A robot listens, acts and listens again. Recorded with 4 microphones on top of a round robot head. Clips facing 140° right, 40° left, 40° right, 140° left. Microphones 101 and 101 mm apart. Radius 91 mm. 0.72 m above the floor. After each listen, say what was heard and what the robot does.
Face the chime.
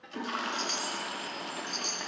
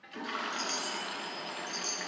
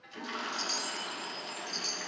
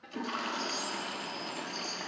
The chime: 65° right. Turn 65° right.
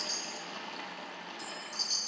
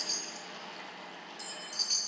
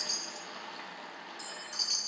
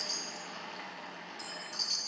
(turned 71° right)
Found it: a chime, straight ahead.